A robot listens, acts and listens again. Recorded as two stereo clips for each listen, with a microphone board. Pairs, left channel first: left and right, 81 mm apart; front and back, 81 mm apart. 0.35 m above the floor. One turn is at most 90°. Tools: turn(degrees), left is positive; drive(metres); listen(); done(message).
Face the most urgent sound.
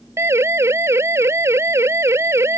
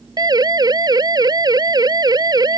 turn(degrees=-90)
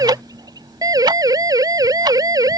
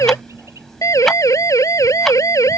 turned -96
turn(degrees=-50)
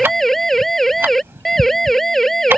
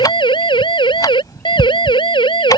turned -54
done("Found it: a siren, straight ahead.")